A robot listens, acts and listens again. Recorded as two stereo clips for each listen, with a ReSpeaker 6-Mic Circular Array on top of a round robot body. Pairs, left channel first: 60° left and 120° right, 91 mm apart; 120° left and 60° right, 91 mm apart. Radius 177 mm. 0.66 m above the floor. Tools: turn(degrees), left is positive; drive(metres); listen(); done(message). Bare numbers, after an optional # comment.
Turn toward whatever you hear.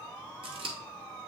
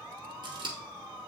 # The scissors: 100° right.
turn(-100)
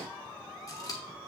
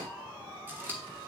# The scissors is now 10° left.
turn(10)
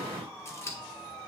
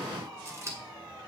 done("Facing the scissors.")